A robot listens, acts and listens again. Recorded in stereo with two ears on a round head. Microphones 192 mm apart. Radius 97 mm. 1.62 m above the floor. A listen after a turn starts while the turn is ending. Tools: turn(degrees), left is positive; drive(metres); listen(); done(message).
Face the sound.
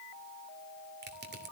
turn(degrees=-50)
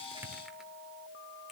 listen()
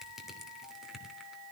done("Found it: crushing, straight ahead.")